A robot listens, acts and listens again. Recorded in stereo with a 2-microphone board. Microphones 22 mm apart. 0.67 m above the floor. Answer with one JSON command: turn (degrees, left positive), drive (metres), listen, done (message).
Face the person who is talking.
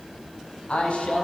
{"turn": 60}
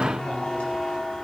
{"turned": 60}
{"listen": true}
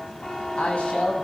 {"turn": 60}
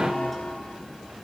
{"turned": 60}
{"listen": true}
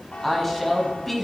{"done": "Facing the woman speaking, over 4 m away."}